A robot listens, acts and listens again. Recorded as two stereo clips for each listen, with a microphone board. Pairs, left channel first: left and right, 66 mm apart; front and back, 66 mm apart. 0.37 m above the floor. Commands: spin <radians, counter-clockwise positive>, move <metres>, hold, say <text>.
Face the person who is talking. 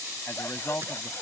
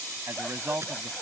spin 2.36
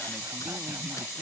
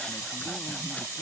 hold
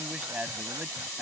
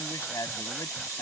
spin -0.35
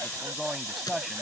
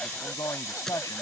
say Facing the man speaking.